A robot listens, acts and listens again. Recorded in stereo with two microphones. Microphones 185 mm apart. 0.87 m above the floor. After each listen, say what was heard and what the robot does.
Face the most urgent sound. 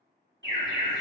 Turn 90° right.
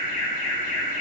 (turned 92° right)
So it is at 15° left. Turn 15° left.
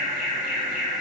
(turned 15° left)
Found it: an alarm, straight ahead.